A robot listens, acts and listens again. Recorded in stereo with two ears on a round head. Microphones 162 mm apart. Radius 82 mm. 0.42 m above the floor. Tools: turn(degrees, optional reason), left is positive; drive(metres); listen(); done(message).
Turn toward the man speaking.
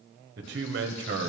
turn(degrees=-65, reason="The man speaking: about 65° right or 115° right.")
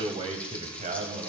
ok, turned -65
turn(degrees=-40, reason="So it is at 40° right.")
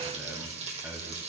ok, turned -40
turn(degrees=-10, reason="The man speaking is now 10° right.")
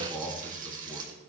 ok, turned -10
done("Facing the man speaking, 2 to 4 m away.")